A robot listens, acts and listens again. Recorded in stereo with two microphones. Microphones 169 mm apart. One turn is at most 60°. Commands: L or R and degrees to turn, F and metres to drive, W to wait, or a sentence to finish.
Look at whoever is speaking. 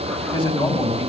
L35
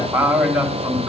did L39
Facing the man speaking.